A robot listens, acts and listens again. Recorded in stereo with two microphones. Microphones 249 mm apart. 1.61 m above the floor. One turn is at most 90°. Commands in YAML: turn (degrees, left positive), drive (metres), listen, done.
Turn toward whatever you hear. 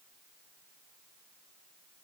listen: true
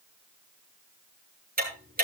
turn: -35
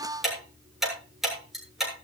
done: "Found it: ticking, straight ahead."